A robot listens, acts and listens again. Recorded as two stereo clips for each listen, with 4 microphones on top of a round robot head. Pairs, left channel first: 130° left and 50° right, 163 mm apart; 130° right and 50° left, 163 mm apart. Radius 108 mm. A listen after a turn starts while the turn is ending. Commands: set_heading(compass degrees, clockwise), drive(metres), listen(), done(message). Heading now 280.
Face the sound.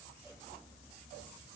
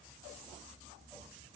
listen()
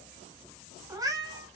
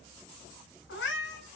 set_heading(35)
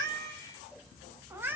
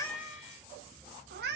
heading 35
set_heading(5)
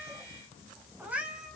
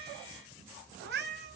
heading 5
set_heading(330)
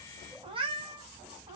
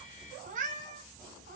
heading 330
set_heading(320)
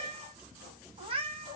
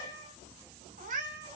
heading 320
done("Facing the cat meowing.")